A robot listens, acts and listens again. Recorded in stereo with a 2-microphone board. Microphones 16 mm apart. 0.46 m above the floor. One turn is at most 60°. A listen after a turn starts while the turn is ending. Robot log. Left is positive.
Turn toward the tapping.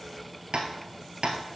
note: The tapping: about 75° right or 105° right.
cmd yaw -60
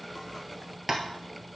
note: So it is at 20° right.
cmd yaw -20
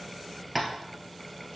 end: Found it: tapping, straight ahead.